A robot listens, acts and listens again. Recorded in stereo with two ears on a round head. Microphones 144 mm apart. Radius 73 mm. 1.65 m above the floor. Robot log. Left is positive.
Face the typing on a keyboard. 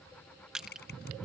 note: The typing on a keyboard: about 70° left or 110° left.
cmd yaw +70
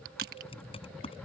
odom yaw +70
note: So it is at 35° left.
cmd yaw +35
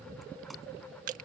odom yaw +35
cmd idle
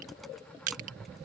cmd idle
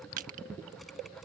end: Facing where the typing on a keyboard came from. I can't hear it now.